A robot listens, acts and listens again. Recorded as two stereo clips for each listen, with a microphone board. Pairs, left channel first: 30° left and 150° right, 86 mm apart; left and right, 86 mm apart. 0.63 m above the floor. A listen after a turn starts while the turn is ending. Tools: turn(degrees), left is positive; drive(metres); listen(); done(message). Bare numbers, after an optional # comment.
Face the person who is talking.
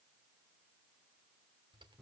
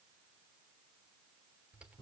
listen()
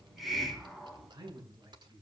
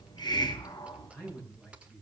# The man speaking: 160° left.
turn(160)
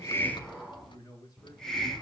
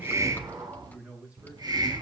# The man speaking is now 15° right.
turn(-15)
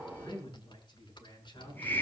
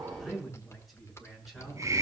done("Found it: a man speaking, straight ahead.")